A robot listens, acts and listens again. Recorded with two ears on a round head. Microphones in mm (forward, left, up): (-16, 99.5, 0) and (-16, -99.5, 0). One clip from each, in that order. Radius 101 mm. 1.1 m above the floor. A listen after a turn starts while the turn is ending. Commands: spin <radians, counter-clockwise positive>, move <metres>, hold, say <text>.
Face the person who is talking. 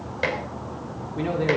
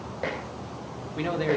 spin -0.52
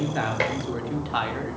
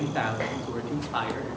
spin 0.17
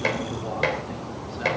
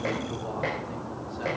hold
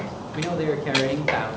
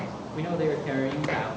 spin 0.35
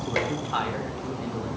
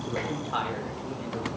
say Facing the man speaking, 2 to 4 m away.